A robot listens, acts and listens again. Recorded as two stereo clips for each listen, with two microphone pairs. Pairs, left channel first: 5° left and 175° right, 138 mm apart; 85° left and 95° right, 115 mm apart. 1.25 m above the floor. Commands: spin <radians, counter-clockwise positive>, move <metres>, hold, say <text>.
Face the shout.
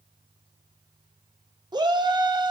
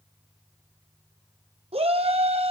spin -2.09
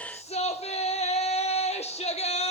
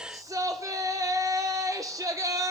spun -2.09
spin -0.52
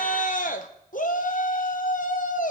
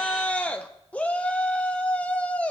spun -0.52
spin 0.17
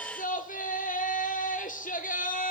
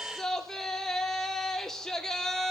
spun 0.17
say Facing the shout, under 1 m away.